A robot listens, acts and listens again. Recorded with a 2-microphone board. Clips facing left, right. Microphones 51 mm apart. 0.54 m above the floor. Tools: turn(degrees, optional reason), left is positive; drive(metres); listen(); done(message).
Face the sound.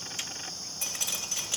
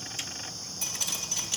turn(degrees=25, reason="The dripping: about 25° left or 155° left.")
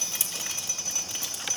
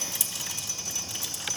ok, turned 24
turn(degrees=130, reason="So it is at 130° left.")
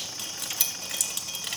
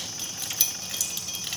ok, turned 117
turn(degrees=10, reason="The dripping is now 10° left.")
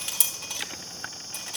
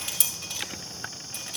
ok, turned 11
done("Facing the dripping, 2 to 4 m away.")